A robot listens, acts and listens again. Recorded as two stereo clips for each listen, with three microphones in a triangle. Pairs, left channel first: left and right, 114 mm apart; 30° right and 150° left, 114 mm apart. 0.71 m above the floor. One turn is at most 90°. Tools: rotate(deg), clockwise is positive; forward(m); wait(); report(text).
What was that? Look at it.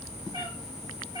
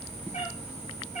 rotate(40)
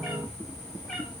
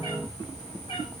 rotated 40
report("Facing the cat meowing, over 4 m away.")